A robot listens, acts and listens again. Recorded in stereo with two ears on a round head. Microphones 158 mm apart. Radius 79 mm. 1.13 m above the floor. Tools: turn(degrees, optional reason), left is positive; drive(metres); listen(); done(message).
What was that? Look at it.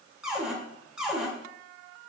turn(degrees=-30)
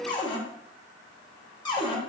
turn(degrees=25, reason="So it is at 25° left.")
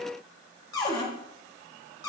turn(degrees=20, reason="The cupboard door is now 20° left.")
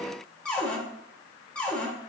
done("Facing the cupboard door, 1 to 2 m away.")